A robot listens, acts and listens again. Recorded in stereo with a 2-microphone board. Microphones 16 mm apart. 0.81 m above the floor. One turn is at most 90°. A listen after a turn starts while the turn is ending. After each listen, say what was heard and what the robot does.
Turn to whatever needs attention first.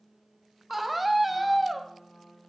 Turn 30° right.
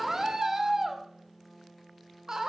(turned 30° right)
So it is at 145° right. Turn 90° right.
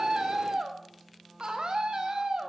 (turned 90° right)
The scream is now 70° right. Turn 70° right.
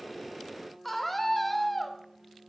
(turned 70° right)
The scream is now 10° left. Turn 10° left.
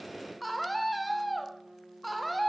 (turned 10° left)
Found it: a scream, straight ahead.